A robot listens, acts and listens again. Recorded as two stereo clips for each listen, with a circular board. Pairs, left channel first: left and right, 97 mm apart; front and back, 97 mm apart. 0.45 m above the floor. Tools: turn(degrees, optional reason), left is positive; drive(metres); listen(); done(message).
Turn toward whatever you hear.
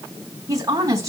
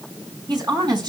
turn(degrees=-140, reason="The woman speaking: 140° right.")
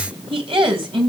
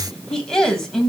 turn(degrees=-85, reason="The woman speaking is now 85° right.")
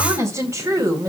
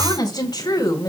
turn(degrees=-40, reason="The woman speaking is now 40° right.")
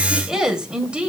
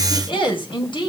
turn(degrees=-15, reason="The woman speaking is now 15° right.")
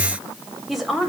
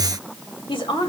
done("Facing the woman speaking.")